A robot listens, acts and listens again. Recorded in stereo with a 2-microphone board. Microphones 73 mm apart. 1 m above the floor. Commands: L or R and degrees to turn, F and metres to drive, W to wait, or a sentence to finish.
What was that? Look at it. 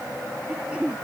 R15
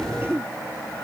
R150
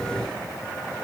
W
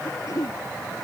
L50
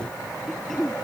Found it: throat clearing, straight ahead.